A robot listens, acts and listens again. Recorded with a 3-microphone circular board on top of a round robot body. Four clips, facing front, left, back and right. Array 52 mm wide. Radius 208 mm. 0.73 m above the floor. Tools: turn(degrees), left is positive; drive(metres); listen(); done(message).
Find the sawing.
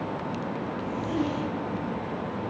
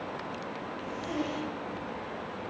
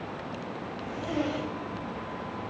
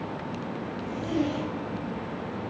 listen()
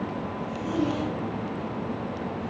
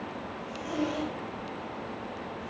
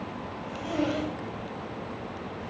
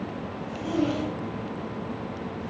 listen()
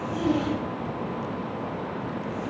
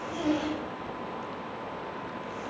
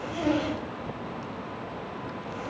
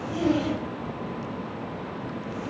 done("I can't make out sawing to turn to.")